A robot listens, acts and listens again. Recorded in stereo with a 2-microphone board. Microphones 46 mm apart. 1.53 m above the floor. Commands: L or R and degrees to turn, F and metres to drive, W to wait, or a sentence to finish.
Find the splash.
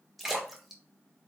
L30
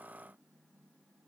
W
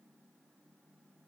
I heard a splash, but can't make it out now. It was about 30° right or 150° left.